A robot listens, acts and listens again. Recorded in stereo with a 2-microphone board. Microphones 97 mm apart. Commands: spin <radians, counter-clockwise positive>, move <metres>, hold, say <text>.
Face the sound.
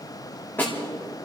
spin 0.35
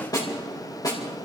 spin 2.44
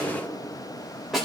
say Found it: a snare drum, straight ahead, 2 to 4 m away.